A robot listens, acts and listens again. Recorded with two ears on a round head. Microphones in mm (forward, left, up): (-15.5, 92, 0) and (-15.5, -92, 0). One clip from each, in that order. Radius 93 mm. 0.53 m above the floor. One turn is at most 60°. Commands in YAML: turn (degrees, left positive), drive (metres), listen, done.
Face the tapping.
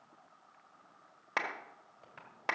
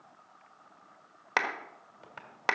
turn: -30
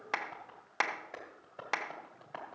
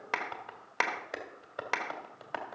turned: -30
turn: -60
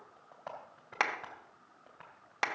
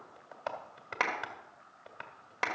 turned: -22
turn: -60
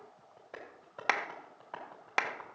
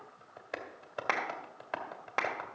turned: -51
turn: -50
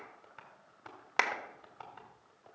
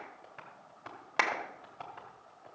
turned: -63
turn: 15
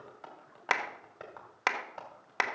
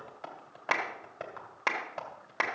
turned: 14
done: "Found it: tapping, straight ahead, 2 to 4 m away."